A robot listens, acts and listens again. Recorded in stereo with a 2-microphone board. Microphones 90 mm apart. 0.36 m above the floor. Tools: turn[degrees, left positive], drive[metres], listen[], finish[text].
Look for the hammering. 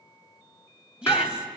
Thought: The hammering: about 30° left or 150° left.
Action: turn[30]
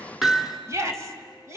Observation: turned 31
Action: finish[Found it: hammering, straight ahead, 2 to 4 m away.]